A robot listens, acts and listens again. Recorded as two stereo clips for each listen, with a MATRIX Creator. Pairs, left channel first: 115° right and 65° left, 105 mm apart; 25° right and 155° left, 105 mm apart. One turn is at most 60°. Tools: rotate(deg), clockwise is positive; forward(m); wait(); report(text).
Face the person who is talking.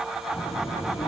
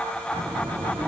rotate(60)
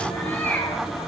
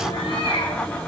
rotate(60)
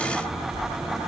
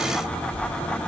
rotate(20)
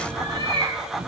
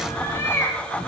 report("Found it: a child speaking, straight ahead.")